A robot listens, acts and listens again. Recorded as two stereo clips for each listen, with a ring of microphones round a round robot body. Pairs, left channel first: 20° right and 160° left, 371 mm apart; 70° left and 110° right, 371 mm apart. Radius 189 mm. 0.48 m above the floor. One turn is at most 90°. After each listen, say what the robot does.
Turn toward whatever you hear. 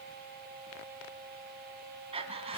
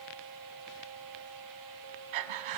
Turn 90° right.
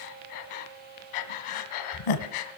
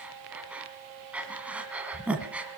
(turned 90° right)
Turn 25° right.
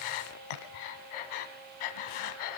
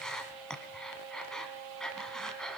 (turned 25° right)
Turn 20° right.
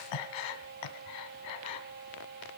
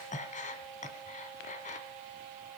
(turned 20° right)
Facing the breathing.